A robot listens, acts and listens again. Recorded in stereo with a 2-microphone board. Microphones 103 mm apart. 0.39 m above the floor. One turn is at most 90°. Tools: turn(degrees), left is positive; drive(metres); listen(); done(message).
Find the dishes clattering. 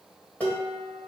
turn(degrees=15)
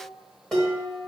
done("Facing the dishes clattering.")